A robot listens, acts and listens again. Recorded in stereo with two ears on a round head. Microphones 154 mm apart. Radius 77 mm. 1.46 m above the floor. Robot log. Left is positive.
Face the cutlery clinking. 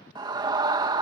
cmd idle
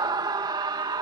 cmd idle
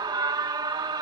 end: I can't make out cutlery clinking to turn to.